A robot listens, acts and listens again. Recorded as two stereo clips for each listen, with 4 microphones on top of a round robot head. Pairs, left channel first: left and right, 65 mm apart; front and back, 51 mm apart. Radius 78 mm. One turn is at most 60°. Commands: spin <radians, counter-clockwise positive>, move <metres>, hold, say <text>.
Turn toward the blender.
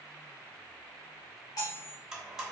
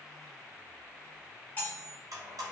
spin -1.05
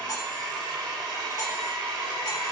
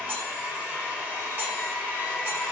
spin -1.05
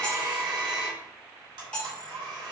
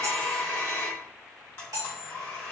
spin -1.05
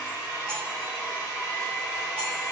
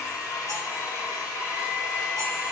spin -0.26
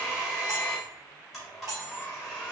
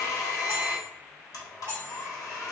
say Facing the blender, under 1 m away.